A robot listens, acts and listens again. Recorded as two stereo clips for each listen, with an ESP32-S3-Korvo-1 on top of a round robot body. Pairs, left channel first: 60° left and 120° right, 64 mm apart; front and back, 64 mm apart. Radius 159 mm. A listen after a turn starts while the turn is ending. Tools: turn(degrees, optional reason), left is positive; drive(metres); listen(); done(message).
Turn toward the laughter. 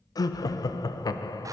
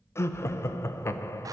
turn(degrees=45, reason="The laughter: 45° left.")
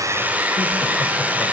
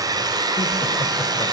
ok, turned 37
turn(degrees=10, reason="Nothing new. It was at 10° left.")
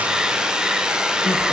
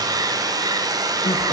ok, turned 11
listen()
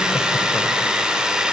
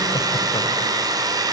done("I heard laughter from this way, but can't make it out now.")